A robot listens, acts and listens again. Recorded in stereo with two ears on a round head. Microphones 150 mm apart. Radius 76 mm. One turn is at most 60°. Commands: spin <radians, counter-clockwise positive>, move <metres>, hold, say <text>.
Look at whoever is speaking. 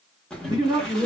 spin -0.44
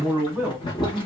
say Facing the man speaking.